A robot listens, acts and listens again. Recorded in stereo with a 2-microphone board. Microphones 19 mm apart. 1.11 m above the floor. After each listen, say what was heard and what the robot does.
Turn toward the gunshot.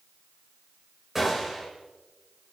Turn 30° right.
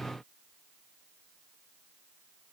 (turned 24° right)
Keep listening.
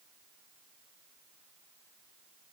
I heard a gunshot, but can't make it out now. It was about 10° left or 140° right.